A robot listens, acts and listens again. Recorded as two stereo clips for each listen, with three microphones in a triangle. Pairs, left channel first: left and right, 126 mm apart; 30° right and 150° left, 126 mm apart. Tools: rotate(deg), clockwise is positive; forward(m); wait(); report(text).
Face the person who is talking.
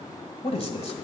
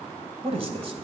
rotate(-115)
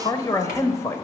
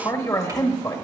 rotate(-25)
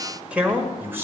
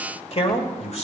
rotate(25)
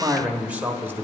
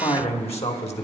rotate(25)
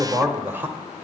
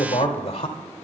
rotate(25)
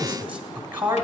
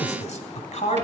rotate(15)
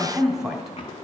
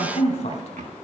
report("Found it: a man speaking, straight ahead, 1 to 2 m away.")